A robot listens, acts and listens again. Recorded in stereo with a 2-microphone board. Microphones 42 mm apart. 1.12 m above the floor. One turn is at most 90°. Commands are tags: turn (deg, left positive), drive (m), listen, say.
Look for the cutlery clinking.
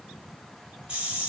<listen/>
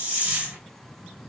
<listen/>
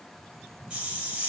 <say>I can't make out cutlery clinking, only a hiss.</say>